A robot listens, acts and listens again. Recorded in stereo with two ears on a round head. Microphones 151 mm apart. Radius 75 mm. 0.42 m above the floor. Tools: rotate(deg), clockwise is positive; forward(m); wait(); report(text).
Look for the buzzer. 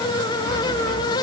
wait()
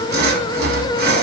wait()
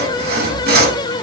report("I can't make out a buzzer to turn to.")